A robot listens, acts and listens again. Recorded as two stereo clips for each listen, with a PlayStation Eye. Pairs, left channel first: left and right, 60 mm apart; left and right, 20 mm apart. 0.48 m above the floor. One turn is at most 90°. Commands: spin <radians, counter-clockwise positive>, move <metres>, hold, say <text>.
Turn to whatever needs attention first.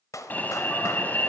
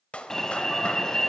spin 0.52
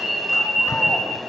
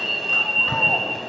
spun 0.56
say Found it: an alarm, straight ahead.